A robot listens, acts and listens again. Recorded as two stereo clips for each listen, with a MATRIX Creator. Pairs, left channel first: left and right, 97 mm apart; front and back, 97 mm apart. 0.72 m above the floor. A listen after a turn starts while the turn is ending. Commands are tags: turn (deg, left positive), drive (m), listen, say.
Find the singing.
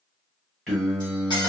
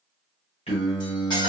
<turn deg="10"/>
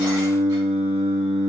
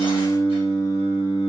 <turn deg="10"/>
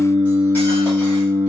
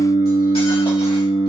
<say>Facing the singing.</say>